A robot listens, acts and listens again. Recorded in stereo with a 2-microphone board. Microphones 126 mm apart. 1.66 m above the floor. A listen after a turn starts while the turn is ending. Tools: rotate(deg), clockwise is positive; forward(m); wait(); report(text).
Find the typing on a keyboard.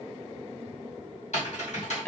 rotate(-70)
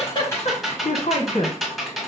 report("Found it: typing on a keyboard, straight ahead, 1 to 2 m away.")